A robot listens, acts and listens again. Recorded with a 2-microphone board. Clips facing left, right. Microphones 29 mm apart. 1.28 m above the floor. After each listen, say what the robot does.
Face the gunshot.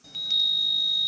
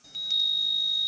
Keep listening.
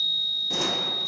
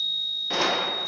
Turn 35° right.
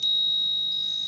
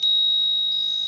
Keep listening.
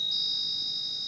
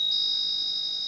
I heard a gunshot, but can't make it out now. It was about straight ahead or 110° right.